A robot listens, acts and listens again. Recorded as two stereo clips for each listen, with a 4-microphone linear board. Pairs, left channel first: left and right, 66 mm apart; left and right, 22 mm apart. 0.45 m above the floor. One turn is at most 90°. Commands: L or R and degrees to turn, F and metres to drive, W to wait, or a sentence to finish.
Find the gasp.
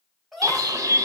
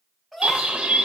L30
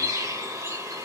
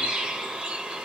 W
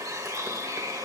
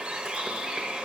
I heard a gasp, but can't make it out now. It was about 30° right or 150° left.